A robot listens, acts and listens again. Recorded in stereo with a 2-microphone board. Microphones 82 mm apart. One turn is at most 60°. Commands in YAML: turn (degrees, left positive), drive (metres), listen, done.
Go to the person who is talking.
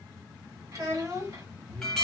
turn: -45
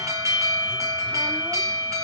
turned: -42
listen: true
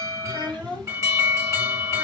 turn: -60
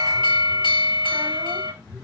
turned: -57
turn: -35
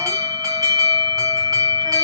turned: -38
listen: true
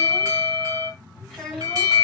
drive: 1.0
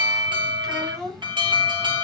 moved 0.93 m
drive: 1.0
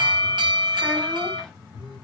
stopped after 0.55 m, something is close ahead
listen: true
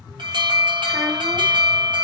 listen: true
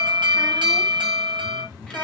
done: "Facing where the child speaking came from. I can't hear it now. I did not reach it."